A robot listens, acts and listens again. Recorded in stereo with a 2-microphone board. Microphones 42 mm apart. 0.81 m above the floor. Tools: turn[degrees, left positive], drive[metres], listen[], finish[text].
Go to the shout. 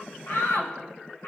Thought: The shout: about 70° left or 110° left.
Action: turn[70]
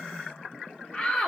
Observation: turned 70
Thought: So it is at 30° left.
Action: turn[30]
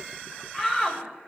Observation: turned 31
Action: drive[1.0]
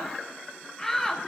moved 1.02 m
Thought: The shout is now 10° left.
Action: turn[10]
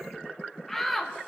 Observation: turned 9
Action: drive[1.0]
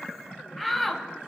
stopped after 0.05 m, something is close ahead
Action: finish[I am next to the shout.]